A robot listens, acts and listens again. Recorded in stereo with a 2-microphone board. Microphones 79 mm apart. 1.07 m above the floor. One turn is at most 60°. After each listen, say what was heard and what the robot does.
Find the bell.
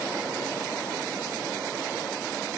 Keep listening.
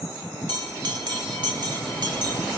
The bell: about 70° right or 110° right. Turn 60° right.
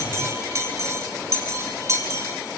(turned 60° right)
So it is at 40° right. Turn 40° right.
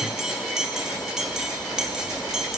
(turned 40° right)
The bell is now 10° right. Turn 10° right.
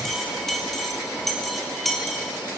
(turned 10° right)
Found it: a bell, straight ahead, 2 to 4 m away.